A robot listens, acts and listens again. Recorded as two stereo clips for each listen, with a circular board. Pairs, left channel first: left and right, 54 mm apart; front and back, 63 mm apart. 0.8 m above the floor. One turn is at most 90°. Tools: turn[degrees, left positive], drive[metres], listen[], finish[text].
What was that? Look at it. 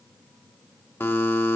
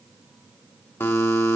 Thought: The buzzer: 50° left.
Action: turn[50]
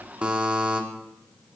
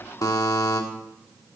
Thought: The buzzer is now 20° right.
Action: turn[-20]
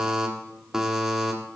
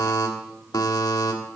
Thought: The buzzer is now 10° right.
Action: turn[-10]
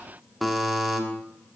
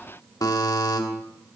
Action: finish[Found it: a buzzer, straight ahead, 1 to 2 m away.]